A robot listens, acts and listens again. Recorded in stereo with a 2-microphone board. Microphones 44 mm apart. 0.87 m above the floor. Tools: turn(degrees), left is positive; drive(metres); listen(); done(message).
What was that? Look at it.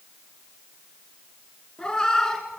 turn(degrees=30)
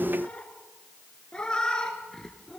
turn(degrees=30)
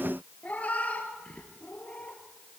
turn(degrees=150)
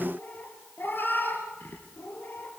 turn(degrees=55)
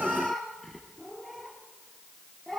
done("Facing the cat meowing, 2 to 4 m away.")